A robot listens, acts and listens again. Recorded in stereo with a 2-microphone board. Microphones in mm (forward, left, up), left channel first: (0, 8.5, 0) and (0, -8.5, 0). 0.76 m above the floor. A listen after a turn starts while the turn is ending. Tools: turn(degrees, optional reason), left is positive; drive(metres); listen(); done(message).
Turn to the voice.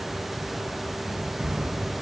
listen()
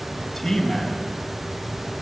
turn(degrees=30)
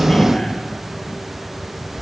turn(degrees=135, reason="So it is at 135° left.")
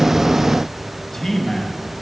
turn(degrees=25, reason="The man speaking is now 25° left.")
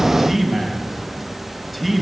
done("Facing the man speaking, over 4 m away.")